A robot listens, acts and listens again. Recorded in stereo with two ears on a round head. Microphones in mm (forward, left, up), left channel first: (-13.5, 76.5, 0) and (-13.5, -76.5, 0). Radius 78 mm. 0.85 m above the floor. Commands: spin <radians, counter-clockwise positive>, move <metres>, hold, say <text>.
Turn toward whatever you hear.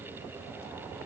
hold
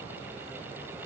hold
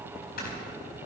spin 1.13
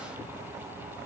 hold
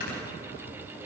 spin 0.96
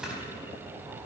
say Facing the snoring, over 4 m away.